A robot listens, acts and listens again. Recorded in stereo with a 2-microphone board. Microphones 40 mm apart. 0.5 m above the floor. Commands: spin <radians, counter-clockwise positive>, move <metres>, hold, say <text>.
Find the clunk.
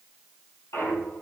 spin 1.57
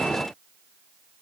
say Facing where the clunk came from. I can't hear it now.